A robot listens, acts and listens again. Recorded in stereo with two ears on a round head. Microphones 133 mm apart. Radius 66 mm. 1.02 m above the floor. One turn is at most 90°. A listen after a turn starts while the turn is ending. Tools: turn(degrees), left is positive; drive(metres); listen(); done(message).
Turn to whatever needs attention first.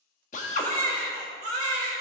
turn(degrees=-50)
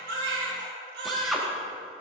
turn(degrees=-75)
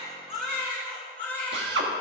turn(degrees=10)
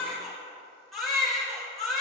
done("Facing the baby crying.")